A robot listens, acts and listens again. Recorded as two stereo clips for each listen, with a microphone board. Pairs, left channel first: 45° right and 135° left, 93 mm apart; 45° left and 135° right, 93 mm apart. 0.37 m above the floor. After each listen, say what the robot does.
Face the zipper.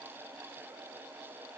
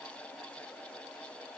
Keep listening.
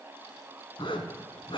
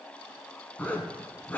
Turn 25° right.
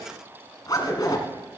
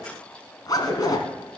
Found it: a zipper, straight ahead, 1 to 2 m away.